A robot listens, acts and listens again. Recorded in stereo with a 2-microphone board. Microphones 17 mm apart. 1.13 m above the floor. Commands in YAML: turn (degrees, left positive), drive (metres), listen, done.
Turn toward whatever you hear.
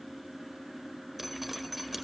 turn: -30
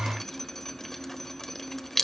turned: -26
turn: 15
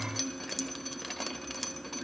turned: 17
done: "Facing the dripping."